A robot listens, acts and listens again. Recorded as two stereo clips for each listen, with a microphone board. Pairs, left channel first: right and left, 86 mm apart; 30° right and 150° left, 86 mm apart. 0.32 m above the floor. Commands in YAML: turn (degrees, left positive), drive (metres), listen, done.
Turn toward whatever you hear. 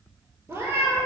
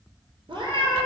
turn: 150
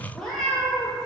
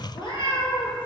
done: "Found it: a cat meowing, straight ahead, under 1 m away."